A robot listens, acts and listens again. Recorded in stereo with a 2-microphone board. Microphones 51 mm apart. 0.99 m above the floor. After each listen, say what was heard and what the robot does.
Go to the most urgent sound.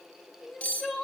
Turn 30° left.
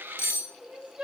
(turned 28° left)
So it is at 25° right. Turn 25° right.
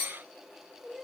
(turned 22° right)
Drive 1.0 m forward.
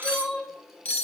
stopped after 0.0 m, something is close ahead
Something is in my way. I am facing the crying but have not reached it.